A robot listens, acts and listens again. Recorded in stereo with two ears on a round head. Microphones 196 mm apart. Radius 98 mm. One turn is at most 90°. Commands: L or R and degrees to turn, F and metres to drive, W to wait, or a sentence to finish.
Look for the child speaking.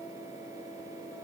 W
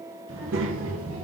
R70
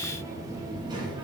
R20
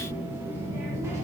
R15
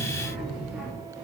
Found it: a child speaking, straight ahead.